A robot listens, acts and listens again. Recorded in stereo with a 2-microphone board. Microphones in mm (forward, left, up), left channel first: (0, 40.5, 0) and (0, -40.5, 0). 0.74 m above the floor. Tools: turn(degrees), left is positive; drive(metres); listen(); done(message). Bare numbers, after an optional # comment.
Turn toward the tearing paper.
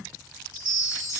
listen()
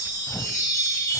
# The tearing paper: about 45° left or 135° left.
turn(45)
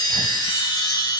listen()
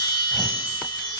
listen()
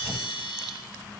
done("Facing the tearing paper, under 1 m away.")